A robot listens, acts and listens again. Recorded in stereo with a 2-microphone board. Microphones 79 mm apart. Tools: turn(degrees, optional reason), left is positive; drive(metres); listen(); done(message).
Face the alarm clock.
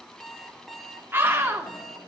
turn(degrees=30)
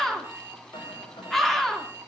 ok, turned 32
turn(degrees=-30, reason="So it is at 30° right.")
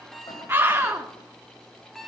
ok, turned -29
done("Facing the alarm clock.")